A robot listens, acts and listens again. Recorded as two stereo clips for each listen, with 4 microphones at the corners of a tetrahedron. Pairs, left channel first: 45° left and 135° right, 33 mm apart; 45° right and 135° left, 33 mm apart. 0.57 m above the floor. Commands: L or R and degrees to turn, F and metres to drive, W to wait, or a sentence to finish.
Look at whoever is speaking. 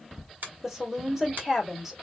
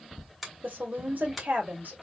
L150
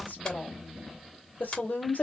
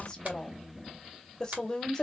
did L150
L30
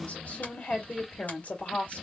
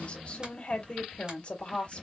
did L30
Facing the woman speaking.